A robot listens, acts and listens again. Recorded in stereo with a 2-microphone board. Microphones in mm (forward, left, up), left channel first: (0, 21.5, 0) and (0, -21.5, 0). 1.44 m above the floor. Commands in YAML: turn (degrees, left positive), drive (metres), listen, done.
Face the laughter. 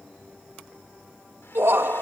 turn: -75
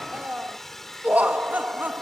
turn: -50
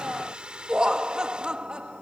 turn: -25
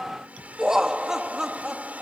turn: -15
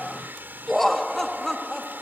done: "Found it: laughter, straight ahead."